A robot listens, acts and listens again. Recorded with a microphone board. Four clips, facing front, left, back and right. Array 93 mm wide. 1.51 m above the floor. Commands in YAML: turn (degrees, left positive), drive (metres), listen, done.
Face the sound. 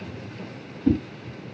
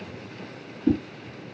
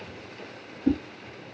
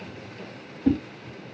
turn: -100
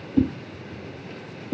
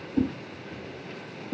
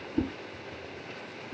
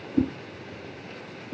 done: "Found it: a whoosh, straight ahead."